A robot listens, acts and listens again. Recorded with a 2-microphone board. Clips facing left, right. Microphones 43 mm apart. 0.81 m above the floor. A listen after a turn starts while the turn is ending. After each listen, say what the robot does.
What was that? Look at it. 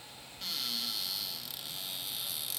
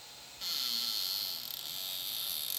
Turn 30° left.
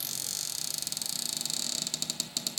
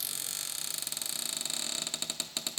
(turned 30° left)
Turn 25° right.
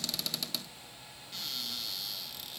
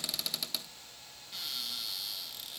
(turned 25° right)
Found it: a cupboard door, straight ahead, 1 to 2 m away.